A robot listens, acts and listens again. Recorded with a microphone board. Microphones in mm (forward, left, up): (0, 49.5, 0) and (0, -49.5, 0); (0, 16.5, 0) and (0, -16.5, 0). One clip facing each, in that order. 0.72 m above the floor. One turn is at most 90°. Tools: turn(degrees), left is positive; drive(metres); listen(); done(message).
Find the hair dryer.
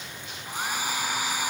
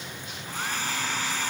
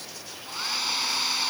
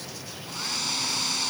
turn(degrees=30)
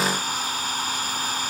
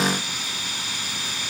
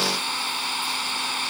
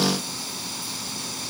turn(degrees=90)
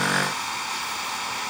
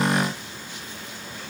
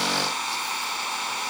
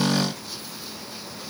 turn(degrees=80)
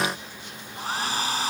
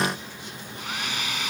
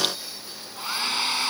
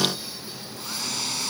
turn(degrees=35)
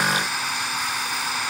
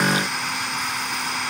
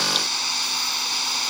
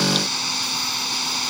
done("Facing the hair dryer.")